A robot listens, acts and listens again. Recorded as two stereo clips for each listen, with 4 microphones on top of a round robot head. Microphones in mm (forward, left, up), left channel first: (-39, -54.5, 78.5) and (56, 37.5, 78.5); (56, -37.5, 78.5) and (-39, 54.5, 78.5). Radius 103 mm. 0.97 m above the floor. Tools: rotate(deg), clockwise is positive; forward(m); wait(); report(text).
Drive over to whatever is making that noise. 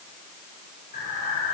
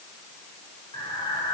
rotate(105)
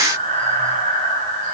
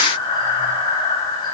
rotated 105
rotate(-15)
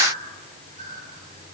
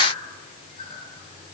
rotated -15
forward(1.0)
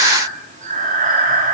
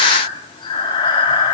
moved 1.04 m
rotate(-10)
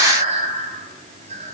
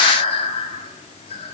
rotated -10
forward(1.0)
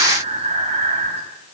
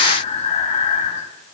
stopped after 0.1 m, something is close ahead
report("I am next to the breathing.")